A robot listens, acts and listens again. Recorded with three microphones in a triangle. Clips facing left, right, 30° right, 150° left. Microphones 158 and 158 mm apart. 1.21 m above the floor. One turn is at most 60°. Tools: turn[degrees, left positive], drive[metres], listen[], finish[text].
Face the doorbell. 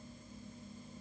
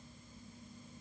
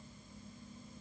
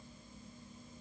Action: listen[]
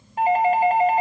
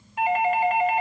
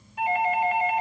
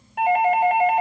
Thought: The doorbell: 140° left.
Action: turn[60]
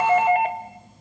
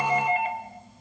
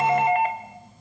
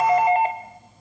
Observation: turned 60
Thought: The doorbell is now 90° left.
Action: turn[60]
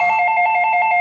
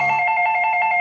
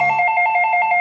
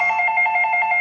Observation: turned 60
Thought: The doorbell is now 30° left.
Action: turn[30]
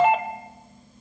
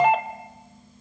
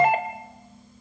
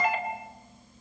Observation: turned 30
Action: finish[Facing the doorbell.]